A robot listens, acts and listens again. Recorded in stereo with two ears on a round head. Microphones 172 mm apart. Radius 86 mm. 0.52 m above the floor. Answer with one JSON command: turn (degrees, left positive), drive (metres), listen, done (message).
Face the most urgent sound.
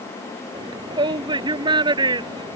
{"turn": -25}
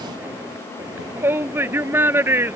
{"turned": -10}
{"turn": -10}
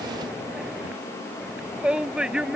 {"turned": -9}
{"done": "Facing the shout."}